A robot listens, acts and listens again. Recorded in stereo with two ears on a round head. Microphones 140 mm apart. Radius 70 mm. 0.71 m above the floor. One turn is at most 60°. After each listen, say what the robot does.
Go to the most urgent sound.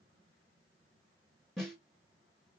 Keep listening.
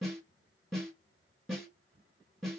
Keep listening.
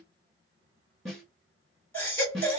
Turn 30° left.
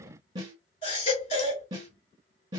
Turn 60° left.
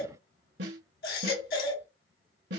Turn 60° left.
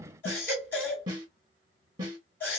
Turn 15° left.
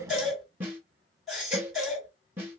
Drive 1.0 m forward.
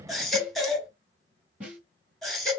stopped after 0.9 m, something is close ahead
I am next to the baby crying.